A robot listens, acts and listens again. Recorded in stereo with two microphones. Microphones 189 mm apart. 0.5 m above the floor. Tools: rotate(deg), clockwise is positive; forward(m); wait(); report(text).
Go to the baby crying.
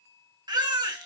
rotate(25)
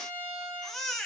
forward(1.0)
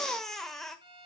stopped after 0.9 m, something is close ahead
report("I am next to the baby crying.")